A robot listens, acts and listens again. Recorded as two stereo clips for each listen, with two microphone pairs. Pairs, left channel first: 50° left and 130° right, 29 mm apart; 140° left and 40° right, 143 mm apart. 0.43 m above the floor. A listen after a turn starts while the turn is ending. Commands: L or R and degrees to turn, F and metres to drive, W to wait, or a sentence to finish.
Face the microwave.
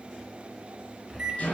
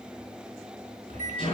L160
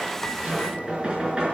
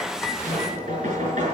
W
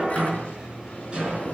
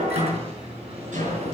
Facing the microwave.